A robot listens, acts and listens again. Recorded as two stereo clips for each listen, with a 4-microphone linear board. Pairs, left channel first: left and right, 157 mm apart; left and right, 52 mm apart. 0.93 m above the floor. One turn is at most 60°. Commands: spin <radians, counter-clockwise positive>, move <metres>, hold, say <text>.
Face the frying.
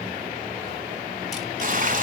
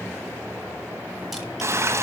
spin -1.05
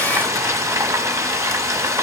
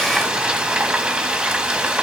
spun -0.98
spin -0.35
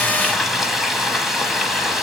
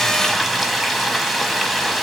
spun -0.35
say Found it: frying, straight ahead, 1 to 2 m away.